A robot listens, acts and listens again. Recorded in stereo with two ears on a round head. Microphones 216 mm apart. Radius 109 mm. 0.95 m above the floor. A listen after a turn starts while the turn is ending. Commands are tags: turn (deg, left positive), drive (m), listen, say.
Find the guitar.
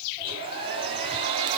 <listen/>
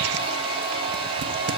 <listen/>
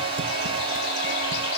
<say>I can't make out a guitar to turn to.</say>